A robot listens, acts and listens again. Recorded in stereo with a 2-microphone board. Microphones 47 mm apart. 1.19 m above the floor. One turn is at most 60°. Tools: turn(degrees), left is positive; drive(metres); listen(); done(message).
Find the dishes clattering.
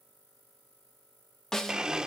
listen()
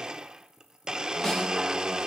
listen()
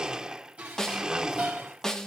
turn(degrees=-25)
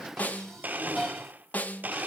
done("Facing the dishes clattering, over 4 m away.")